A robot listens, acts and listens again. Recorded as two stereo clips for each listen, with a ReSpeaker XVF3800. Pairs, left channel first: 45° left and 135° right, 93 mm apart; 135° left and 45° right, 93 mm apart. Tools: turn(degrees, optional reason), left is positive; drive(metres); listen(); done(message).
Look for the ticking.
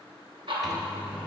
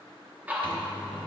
turn(degrees=-115, reason="The ticking: 115° right.")
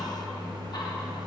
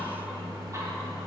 listen()
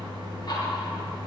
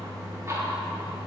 listen()
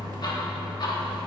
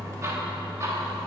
done("I heard ticking from this way, but can't make it out now.")